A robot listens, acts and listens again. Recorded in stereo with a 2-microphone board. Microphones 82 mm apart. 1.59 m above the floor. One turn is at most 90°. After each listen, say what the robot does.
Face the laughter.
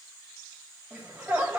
Turn 15° right.
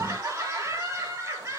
Turn 90° right.
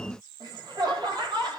Turn 70° right.
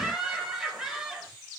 Turn 10° right.
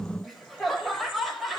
Found it: laughter, straight ahead, 2 to 4 m away.